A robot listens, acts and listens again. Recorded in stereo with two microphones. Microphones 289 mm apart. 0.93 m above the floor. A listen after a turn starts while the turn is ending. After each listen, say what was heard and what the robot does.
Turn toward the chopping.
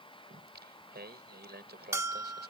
Keep listening.
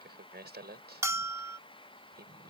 Keep listening.
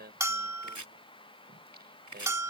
Turn 90° right.
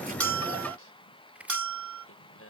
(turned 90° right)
Found it: chopping, straight ahead.